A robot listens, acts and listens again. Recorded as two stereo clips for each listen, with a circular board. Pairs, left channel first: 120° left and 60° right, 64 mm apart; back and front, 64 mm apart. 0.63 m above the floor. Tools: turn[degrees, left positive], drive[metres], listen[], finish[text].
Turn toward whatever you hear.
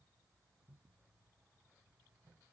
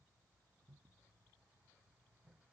Action: listen[]
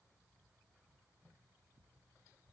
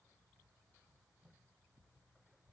Action: listen[]
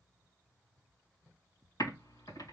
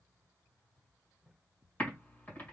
Thought: The typing on a keyboard: 115° left.
Action: turn[115]
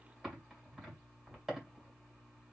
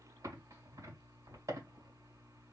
Thought: The typing on a keyboard is now 25° left.
Action: turn[25]
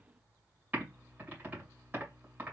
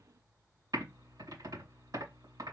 Action: finish[Facing the typing on a keyboard.]